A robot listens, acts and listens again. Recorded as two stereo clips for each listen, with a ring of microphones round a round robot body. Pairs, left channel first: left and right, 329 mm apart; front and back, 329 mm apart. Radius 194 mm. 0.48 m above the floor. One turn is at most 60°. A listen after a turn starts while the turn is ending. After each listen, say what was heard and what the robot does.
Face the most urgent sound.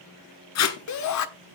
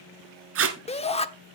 The shout: 70° left. Turn 60° left.
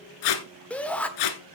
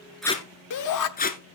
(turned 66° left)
Found it: a shout, straight ahead, 1 to 2 m away.